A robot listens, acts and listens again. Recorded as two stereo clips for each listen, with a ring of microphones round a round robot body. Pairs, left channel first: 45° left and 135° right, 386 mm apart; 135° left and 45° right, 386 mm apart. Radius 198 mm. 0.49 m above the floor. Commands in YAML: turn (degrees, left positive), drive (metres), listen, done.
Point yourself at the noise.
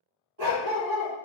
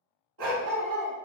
turn: -90
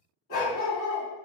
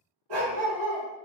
turn: -15
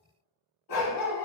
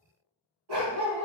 done: "Facing the dog barking, under 1 m away."